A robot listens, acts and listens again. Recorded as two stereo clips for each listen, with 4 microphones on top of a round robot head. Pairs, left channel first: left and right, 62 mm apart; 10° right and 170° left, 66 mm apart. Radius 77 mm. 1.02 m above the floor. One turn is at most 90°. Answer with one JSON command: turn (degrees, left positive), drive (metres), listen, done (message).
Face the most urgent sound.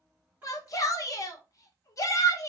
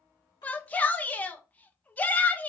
{"turn": 60}
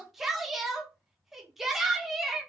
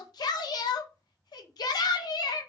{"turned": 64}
{"done": "Found it: a shout, straight ahead."}